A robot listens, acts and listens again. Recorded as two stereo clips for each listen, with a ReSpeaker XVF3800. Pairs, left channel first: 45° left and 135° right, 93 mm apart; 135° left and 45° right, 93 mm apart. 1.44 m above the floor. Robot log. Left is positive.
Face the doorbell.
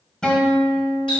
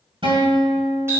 cmd idle
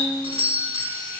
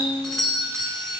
note: The doorbell: 140° right.
cmd yaw -140
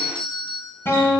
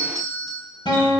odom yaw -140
end: Found it: a doorbell, straight ahead, 1 to 2 m away.